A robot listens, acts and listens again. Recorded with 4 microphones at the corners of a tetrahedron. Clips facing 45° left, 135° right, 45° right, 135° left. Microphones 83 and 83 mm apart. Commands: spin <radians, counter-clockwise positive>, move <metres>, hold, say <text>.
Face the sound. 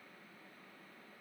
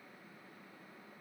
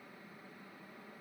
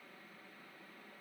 hold
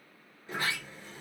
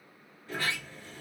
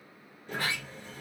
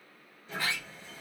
spin -0.44
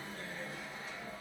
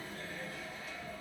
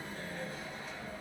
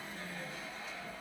spin -0.26
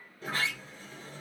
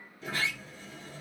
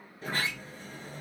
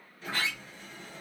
say Facing the sliding door, 1 to 2 m away.